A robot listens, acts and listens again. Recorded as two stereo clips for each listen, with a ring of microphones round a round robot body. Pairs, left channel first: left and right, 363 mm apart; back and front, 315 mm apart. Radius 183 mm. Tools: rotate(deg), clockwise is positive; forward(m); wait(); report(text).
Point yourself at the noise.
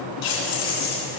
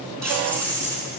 rotate(-95)
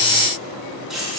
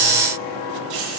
report("Facing the keys jangling, 2 to 4 m away.")